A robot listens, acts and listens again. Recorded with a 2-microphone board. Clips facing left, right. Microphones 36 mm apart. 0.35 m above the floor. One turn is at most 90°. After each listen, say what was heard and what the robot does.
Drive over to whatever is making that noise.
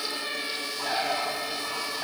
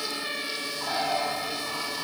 The bird: about 65° left or 115° left. Turn 65° left.
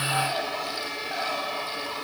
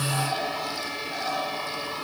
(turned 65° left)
So it is at 50° left. Turn 50° left.
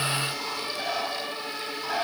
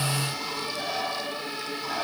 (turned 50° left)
The bird is now 20° left. Turn 20° left.
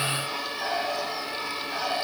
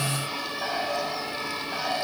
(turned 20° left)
Drive 1.0 m forward.
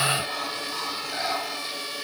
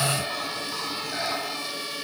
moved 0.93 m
Drive 1.0 m forward.
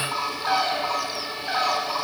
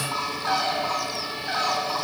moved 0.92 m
The bird is now 10° left. Turn 10° left.
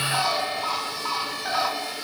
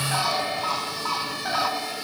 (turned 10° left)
Drive 1.0 m forward.
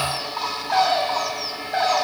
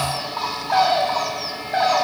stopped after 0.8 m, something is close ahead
Arrived at the bird, straight ahead.